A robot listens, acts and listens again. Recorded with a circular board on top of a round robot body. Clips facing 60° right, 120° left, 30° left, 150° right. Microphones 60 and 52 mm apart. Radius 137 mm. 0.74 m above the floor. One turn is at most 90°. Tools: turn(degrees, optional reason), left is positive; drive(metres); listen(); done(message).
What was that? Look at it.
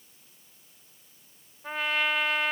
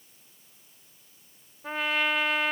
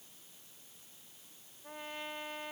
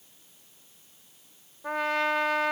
turn(degrees=-90, reason="The trumpet: 150° right.")
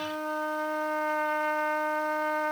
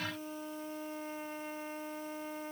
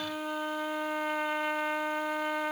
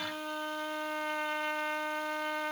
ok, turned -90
turn(degrees=-55, reason="The trumpet is now 55° right.")
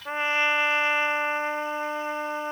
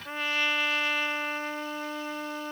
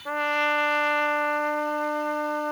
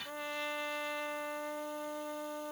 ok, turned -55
done("Found it: a trumpet, straight ahead.")